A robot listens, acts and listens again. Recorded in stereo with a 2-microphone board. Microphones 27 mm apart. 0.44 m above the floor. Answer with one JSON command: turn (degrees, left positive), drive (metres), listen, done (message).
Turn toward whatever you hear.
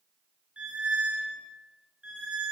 {"turn": -70}
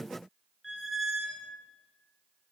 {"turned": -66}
{"turn": -10}
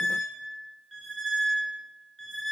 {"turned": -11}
{"done": "Facing the squeak."}